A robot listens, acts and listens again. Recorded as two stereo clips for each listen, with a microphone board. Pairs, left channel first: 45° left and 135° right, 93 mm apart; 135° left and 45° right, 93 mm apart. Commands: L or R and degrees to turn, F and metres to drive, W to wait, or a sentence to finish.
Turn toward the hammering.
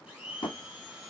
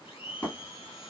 L75
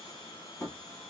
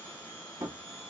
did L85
R10
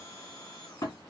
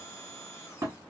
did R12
Found it: hammering, straight ahead.